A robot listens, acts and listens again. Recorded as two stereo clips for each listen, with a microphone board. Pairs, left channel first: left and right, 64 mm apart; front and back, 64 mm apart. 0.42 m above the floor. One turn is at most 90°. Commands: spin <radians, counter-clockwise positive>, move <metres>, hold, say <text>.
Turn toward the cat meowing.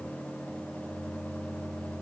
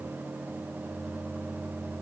hold
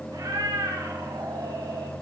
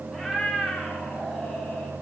spin -1.48
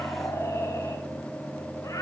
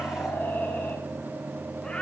spin 1.31
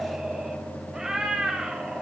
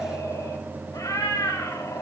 spin -0.17
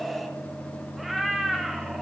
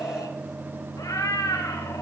say Facing the cat meowing.